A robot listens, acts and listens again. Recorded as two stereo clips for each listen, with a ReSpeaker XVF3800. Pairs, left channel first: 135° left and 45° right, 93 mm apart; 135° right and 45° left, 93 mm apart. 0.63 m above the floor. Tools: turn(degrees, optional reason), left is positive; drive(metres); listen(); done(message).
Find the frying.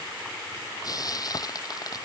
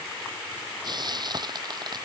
turn(degrees=85, reason="The frying: 85° left.")
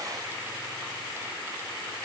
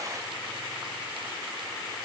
listen()
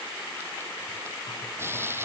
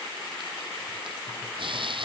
turn(degrees=20, reason="The frying is now 20° left.")
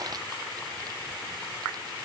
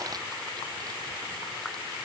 listen()
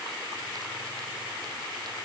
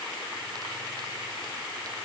listen()
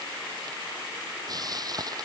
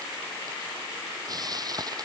done("Found it: frying, straight ahead.")